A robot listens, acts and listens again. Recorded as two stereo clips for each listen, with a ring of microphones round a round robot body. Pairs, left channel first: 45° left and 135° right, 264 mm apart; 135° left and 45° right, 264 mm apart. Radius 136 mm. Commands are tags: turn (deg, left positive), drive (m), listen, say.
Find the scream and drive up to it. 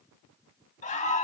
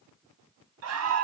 <turn deg="-20"/>
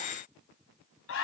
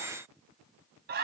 <turn deg="10"/>
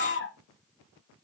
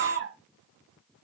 <drive m="1.0"/>
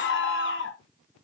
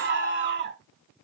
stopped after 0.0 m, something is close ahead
<say>Something is in my way. I am facing the scream but have not reached it.</say>